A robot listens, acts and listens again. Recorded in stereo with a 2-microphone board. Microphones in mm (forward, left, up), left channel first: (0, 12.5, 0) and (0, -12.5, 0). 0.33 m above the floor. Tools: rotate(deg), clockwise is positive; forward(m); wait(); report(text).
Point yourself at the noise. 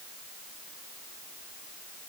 wait()
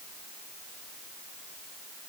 wait()
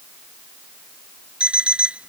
rotate(50)
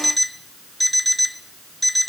report("Facing the alarm clock.")